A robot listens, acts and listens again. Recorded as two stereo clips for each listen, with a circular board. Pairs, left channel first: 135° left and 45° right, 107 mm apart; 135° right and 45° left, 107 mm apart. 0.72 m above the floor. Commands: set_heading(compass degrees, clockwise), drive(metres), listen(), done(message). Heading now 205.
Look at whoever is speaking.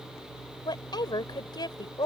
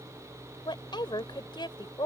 set_heading(25)
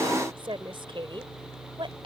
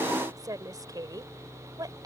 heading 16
set_heading(26)
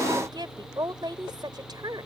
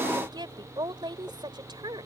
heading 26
done("Found it: a woman speaking, straight ahead.")